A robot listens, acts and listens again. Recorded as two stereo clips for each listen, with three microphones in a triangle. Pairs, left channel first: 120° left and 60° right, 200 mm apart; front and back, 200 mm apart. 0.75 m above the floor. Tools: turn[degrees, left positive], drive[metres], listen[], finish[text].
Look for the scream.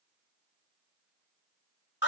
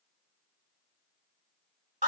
Action: listen[]
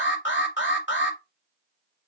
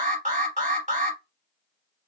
Action: listen[]
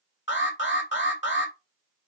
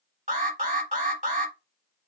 Action: finish[I can't make out a scream, only an alarm.]